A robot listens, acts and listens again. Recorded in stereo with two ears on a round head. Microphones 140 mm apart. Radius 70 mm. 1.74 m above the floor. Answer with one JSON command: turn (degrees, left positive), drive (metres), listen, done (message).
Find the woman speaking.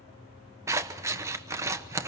{"listen": true}
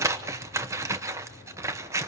{"listen": true}
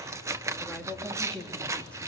{"turn": 30}
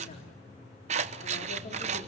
{"turn": 130}
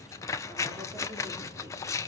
{"listen": true}
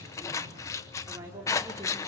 {"turn": -20}
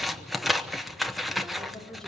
{"done": "Found it: a woman speaking, straight ahead."}